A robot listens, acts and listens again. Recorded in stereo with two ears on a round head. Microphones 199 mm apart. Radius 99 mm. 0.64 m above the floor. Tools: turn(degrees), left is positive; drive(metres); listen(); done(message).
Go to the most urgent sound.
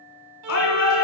turn(degrees=70)
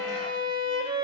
listen()
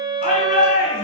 turn(degrees=35)
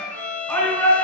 drive(metres=1.0)
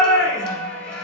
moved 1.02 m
drive(metres=1.0)
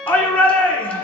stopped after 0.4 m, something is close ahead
turn(degrees=10)
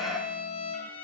listen()
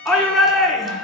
done("Arrived at the shout, straight ahead.")